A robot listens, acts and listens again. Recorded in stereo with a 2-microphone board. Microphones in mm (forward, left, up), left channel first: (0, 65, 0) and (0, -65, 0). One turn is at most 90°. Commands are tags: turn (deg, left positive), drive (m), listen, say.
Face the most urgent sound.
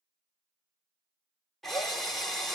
<listen/>
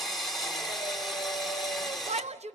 <turn deg="-55"/>
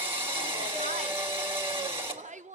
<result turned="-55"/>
<turn deg="-70"/>
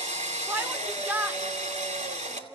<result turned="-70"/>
<turn deg="-15"/>
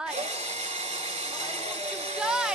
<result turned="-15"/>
<say>Facing the shout, under 1 m away.</say>